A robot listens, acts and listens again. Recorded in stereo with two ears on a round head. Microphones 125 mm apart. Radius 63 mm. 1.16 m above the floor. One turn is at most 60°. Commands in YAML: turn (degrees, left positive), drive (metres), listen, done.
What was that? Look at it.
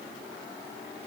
listen: true
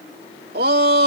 turn: -60
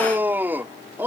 turn: -15
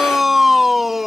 done: "Facing the shout."